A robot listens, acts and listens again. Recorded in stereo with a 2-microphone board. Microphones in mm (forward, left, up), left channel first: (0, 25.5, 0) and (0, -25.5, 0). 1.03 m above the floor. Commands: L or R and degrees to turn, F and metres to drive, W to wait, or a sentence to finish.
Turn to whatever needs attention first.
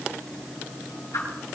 W
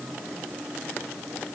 W
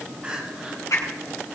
R20
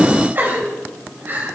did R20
R140
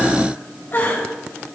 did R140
L45
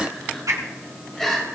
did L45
Found it: crying, straight ahead, 2 to 4 m away.